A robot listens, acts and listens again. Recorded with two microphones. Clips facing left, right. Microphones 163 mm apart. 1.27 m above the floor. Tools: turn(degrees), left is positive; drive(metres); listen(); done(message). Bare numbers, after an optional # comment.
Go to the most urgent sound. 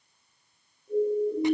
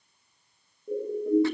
# The siren: about 60° right or 120° right.
turn(-60)
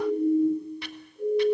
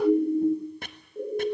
# So it is at 55° right.
turn(-55)
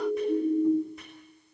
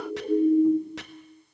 # The siren is now 10° right.
turn(-10)
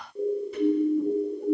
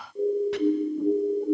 drive(1.0)
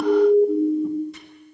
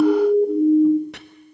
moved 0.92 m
drive(1.0)
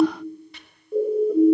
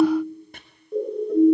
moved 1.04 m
drive(1.0)
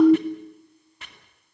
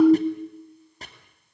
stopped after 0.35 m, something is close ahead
done("I am next to the siren.")